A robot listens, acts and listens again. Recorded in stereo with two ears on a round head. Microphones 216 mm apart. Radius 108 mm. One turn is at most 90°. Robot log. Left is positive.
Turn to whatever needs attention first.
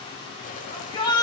note: The shout: about 20° left or 160° left.
cmd yaw +20
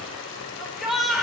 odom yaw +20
end: Found it: a shout, straight ahead, over 4 m away.